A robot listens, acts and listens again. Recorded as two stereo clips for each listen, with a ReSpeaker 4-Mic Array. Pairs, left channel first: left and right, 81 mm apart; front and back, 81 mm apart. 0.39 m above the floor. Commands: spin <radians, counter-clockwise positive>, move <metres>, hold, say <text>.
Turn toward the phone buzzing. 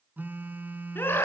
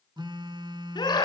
spin -2.71
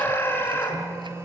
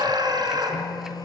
spin -0.61
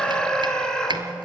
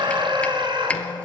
hold
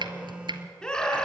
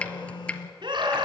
spin -0.26
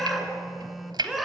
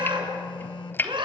say Found it: a phone buzzing, straight ahead, under 1 m away.